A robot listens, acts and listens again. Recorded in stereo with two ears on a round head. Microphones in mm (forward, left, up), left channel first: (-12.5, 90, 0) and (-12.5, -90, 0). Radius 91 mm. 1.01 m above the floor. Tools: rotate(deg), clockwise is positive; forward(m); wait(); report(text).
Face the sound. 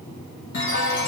rotate(-60)
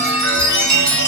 report("Found it: a chime, straight ahead.")